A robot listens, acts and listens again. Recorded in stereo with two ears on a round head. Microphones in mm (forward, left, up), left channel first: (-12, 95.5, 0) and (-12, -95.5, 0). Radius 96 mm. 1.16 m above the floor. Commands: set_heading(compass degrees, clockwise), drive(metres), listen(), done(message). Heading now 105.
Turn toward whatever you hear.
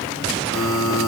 set_heading(80)
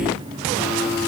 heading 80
done("Facing the buzzer.")